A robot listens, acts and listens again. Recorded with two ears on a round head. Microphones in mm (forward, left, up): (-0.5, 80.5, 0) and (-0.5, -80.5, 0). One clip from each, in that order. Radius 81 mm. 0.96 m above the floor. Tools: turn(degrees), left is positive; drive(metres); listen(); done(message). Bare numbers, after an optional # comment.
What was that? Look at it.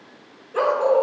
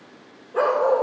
turn(90)
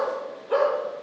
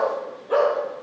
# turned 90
# So it is at 10° left.
turn(10)
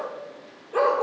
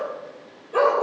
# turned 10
done("Found it: a dog barking, straight ahead.")